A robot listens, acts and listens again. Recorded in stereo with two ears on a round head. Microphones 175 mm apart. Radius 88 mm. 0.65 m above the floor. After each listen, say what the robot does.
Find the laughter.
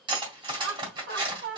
Turn 55° right.
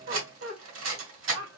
Turn 75° right.
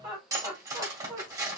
Turn 15° right.
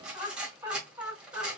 Turn 10° right.
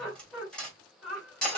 Found it: laughter, straight ahead.